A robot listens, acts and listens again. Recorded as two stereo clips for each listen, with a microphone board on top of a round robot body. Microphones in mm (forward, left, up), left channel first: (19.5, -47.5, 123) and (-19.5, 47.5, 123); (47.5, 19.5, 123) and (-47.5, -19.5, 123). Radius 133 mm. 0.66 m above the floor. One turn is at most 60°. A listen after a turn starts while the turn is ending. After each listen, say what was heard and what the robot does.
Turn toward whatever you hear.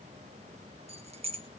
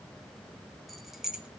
The keys jangling: 120° left. Turn 60° left.
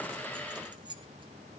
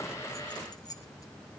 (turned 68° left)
The keys jangling is now 75° left. Turn 60° left.
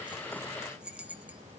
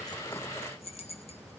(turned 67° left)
The keys jangling is now 35° left. Turn 35° left.
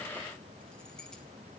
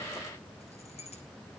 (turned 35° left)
Keep listening.
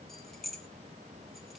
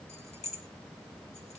The keys jangling is now 20° left. Turn 20° left.
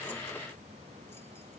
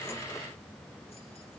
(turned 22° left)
Keep listening.
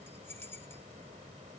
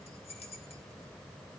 Found it: keys jangling, straight ahead, 2 to 4 m away.